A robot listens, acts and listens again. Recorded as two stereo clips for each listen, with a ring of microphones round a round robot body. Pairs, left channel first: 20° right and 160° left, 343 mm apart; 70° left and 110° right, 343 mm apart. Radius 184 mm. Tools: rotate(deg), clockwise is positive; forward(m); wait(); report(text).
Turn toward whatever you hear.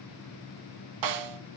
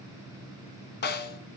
rotate(-130)
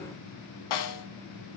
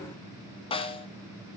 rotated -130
report("Found it: a snare drum, straight ahead, 1 to 2 m away.")